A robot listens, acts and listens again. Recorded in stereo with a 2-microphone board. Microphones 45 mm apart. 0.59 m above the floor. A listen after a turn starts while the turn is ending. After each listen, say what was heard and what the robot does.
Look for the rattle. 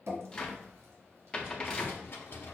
The rattle: about 65° left or 115° left. Turn 65° left.
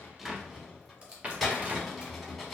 Facing the rattle, under 1 m away.